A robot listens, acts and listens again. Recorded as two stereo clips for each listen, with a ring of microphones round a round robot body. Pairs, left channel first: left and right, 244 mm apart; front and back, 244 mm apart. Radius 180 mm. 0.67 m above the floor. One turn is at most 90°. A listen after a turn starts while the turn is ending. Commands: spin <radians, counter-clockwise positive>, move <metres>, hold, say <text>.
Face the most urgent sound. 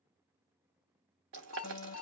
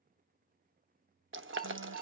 spin 1.57
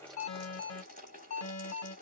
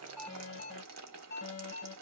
spin 1.22
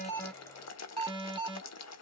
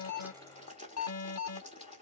spin -0.26
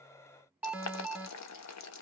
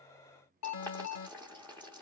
say Found it: an alarm, straight ahead.